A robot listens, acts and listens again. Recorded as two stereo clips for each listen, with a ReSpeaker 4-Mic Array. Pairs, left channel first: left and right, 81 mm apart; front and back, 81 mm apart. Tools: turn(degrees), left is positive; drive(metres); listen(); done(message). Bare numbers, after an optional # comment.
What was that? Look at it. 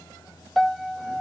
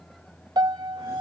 # The piano: straight behind.
turn(180)
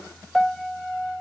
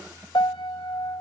done("Found it: a piano, straight ahead.")